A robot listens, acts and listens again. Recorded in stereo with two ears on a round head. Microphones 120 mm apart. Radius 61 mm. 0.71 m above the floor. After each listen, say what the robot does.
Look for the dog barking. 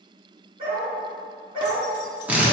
Turn 40° right.
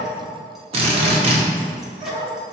Turn 110° right.
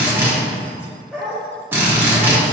Found it: a dog barking, straight ahead.